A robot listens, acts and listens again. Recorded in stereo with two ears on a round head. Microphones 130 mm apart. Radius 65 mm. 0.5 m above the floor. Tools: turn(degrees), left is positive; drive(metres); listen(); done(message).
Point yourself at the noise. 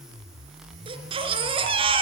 turn(degrees=-40)
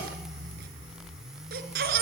turn(degrees=-105)
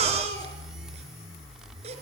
turn(degrees=-45)
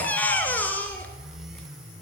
turn(degrees=10)
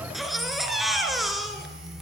done("Found it: a baby crying, straight ahead, 2 to 4 m away.")